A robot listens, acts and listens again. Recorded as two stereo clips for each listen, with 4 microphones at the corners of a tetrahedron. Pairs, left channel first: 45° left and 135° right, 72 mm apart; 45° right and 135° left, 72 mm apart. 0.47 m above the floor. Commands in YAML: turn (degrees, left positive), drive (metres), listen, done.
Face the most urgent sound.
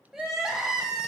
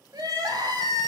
turn: 140
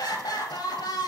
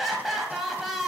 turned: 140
turn: 50
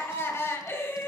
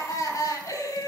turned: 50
turn: -10
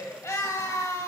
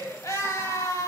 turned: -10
done: "Facing the crying, 1 to 2 m away."